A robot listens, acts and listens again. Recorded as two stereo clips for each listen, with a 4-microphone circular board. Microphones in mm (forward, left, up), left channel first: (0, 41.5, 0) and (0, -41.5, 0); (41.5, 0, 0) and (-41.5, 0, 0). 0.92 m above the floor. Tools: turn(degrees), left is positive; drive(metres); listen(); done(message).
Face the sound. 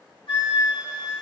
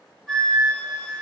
turn(degrees=85)
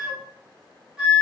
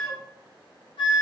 turn(degrees=-10)
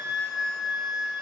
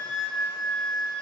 done("Found it: a flute, straight ahead.")